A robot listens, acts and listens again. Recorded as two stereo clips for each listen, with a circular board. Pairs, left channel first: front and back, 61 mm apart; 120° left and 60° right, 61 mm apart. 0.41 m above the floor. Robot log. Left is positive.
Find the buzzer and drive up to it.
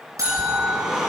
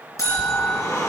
note: The buzzer: 150° left.
cmd yaw +150
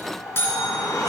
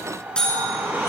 note: The buzzer is now 45° left.
cmd yaw +45
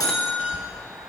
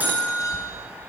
cmd fwd 1.0
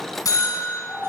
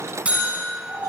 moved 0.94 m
note: The buzzer is now 10° left.
cmd yaw +10
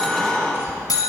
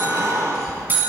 cmd fwd 1.0
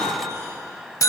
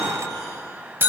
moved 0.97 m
note: The buzzer is now 10° right.
cmd yaw -10
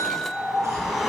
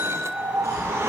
cmd fwd 1.0
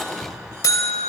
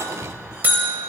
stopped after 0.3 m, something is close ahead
end: Arrived at the buzzer, straight ahead.